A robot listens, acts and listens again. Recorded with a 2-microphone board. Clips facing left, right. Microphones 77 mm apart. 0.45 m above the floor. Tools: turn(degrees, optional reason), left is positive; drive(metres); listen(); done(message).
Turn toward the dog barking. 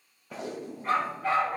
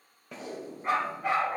turn(degrees=-20, reason="The dog barking: about 20° right or 160° right.")
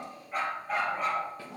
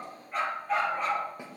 done("Facing the dog barking.")